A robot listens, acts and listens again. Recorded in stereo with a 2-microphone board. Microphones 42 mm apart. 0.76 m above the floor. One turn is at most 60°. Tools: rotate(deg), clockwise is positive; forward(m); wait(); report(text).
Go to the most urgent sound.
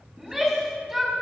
rotate(30)
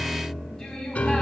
rotate(-20)
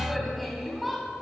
forward(1.0)
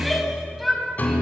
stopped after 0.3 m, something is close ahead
report("Something is in my way. I am facing the shout but have not reached it.")